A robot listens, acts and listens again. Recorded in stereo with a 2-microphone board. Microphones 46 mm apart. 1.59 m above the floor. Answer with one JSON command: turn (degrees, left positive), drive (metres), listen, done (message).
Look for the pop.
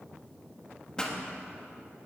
{"turn": 15}
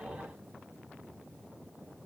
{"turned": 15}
{"listen": true}
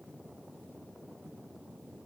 {"done": "I heard a pop, but can't make it out now. It was about straight ahead or 150° left."}